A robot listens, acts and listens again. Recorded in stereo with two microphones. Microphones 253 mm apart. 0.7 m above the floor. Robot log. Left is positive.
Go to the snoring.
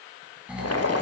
cmd yaw -30
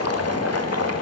cmd idle
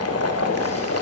cmd idle
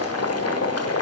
end: I heard snoring, but can't make it out now. It was about 25° left or 145° right. I did not reach it.